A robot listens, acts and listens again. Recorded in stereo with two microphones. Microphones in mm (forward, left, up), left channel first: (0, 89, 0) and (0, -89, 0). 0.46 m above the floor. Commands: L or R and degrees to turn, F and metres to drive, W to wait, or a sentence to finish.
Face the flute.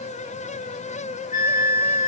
L45
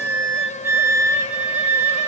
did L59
R10
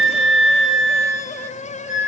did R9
Found it: a flute, straight ahead, under 1 m away.